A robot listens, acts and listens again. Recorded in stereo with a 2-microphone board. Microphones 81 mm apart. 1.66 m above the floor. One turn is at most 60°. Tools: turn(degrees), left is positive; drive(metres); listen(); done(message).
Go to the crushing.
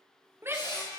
turn(degrees=60)
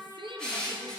turn(degrees=10)
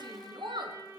listen()
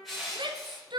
drive(metres=1.0)
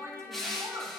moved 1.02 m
drive(metres=1.0)
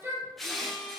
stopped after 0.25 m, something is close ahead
done("I am next to the crushing.")